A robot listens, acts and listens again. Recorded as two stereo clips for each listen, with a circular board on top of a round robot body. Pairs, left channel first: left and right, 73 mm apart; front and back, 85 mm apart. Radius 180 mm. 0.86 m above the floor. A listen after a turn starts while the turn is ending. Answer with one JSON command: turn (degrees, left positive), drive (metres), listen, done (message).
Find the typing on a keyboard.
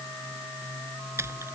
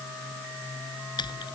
{"turn": -35}
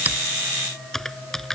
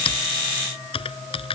{"done": "Found it: typing on a keyboard, straight ahead."}